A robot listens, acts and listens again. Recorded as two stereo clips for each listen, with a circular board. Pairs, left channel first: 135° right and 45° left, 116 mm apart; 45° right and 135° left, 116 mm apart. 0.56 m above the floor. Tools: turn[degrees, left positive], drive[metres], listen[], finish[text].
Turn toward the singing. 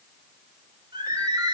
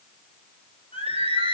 Action: finish[Found it: singing, straight ahead.]